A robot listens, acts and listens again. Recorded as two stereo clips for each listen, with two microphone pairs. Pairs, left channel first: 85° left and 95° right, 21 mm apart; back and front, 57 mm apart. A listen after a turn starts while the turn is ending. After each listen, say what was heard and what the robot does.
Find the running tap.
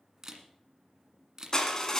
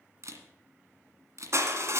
Keep listening.
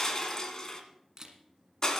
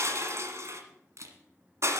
Keep listening.
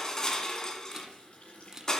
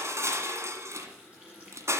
The running tap: 70° left. Turn 70° left.
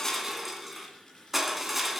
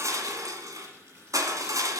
The running tap is now 30° left. Turn 30° left.
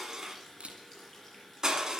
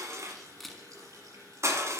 Facing the running tap, over 4 m away.